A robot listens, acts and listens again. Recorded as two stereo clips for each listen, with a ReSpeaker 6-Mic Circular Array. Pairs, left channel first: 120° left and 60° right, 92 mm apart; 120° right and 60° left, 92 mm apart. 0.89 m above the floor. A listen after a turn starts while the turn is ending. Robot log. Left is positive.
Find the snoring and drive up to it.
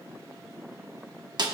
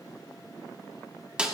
cmd idle
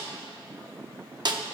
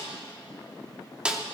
cmd idle
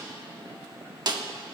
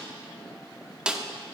end: I can't make out snoring to turn to.